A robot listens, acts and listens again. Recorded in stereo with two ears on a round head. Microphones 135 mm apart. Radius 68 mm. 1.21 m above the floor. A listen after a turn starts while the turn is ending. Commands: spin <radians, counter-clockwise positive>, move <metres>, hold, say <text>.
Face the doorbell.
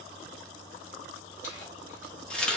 hold
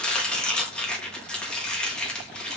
hold
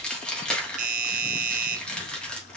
spin -0.96
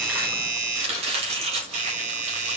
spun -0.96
spin -1.13
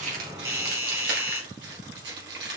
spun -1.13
spin -0.26
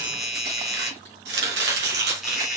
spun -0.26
say Facing the doorbell.